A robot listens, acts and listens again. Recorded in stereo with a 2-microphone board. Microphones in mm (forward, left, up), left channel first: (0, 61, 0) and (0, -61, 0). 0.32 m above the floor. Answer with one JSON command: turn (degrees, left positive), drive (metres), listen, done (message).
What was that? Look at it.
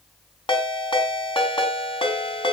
{"turn": 45}
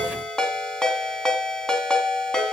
{"done": "Facing the ringtone, 2 to 4 m away."}